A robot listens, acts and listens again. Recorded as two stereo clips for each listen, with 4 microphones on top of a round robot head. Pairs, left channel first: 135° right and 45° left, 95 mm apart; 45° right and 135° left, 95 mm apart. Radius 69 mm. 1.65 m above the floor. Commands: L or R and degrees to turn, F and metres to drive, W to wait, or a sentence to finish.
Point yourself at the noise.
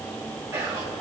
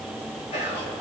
R20
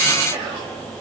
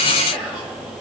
Facing the whispering, 2 to 4 m away.